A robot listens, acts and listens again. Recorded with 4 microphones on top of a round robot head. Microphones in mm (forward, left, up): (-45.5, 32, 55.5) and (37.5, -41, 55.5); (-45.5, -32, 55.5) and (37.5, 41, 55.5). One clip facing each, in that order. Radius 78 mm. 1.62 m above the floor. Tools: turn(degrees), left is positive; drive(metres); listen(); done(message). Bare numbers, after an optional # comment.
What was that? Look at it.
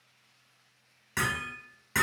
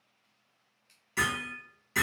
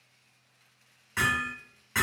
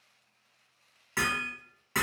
# The hammering: 100° left.
turn(100)
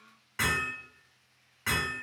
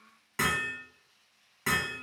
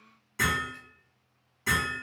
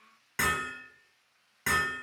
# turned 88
# The hammering is now 10° left.
turn(10)
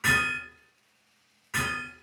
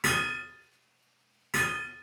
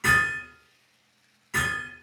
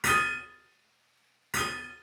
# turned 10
done("Facing the hammering, 1 to 2 m away.")